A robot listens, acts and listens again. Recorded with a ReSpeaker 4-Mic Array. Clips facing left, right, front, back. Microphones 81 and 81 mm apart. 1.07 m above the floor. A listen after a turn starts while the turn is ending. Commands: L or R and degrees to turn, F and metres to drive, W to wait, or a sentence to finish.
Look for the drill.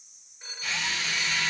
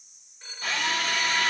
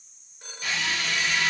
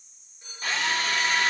R130
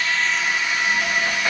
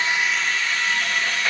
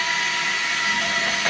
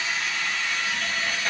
L15
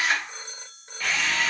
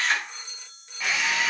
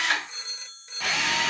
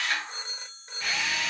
Found it: a drill, straight ahead, under 1 m away.